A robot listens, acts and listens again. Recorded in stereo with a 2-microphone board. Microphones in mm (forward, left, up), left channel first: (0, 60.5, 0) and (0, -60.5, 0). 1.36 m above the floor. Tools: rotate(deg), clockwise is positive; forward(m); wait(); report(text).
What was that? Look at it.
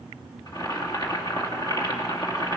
rotate(-35)
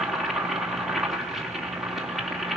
report("Found it: boiling, straight ahead.")